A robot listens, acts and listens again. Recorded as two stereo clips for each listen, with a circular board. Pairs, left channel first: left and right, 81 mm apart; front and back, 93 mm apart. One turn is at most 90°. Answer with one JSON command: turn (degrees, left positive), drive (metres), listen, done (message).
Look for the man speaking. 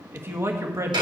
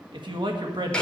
{"turn": -90}
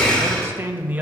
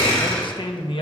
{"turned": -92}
{"turn": -20}
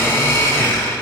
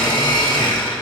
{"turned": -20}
{"listen": true}
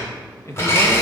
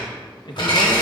{"turn": 35}
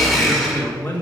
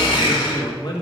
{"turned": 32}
{"turn": 20}
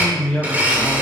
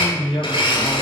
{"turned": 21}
{"done": "Found it: a man speaking, straight ahead."}